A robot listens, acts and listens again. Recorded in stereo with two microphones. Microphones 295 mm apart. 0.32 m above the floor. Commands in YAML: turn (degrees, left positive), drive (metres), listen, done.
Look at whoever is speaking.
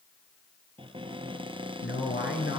turn: 35
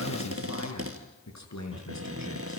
turn: 105
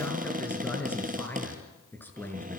done: "Facing the man speaking, over 4 m away."